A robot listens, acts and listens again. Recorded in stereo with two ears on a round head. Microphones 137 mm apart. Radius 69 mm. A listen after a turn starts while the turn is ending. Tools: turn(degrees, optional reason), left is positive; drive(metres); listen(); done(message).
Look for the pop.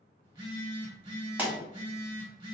turn(degrees=-30)
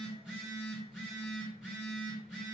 listen()
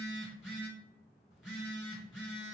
done("I heard a pop, but can't make it out now. It was about 20° left or 140° right.")